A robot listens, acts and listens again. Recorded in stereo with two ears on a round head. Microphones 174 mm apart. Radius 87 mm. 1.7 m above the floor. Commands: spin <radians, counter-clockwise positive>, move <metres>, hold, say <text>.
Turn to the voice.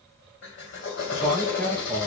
spin 0.52
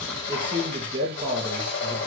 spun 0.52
spin -0.44
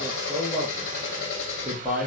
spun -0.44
say Found it: a man speaking, straight ahead.